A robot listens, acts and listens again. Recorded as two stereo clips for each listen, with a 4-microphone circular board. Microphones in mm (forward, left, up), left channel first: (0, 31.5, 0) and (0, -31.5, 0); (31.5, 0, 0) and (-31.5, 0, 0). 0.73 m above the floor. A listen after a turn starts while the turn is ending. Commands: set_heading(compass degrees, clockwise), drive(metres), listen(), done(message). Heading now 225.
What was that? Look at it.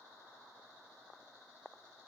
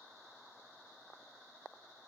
listen()
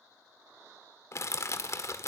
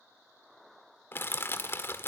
set_heading(175)
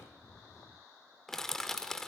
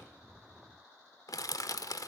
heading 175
done("Facing the crushing, 1 to 2 m away.")